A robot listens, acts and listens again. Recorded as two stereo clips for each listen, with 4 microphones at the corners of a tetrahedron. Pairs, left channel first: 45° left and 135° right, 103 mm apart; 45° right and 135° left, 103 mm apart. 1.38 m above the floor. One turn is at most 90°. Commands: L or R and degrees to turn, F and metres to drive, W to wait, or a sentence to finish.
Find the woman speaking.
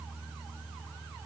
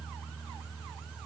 W
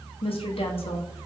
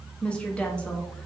L35
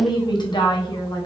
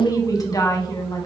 Found it: a woman speaking, straight ahead, under 1 m away.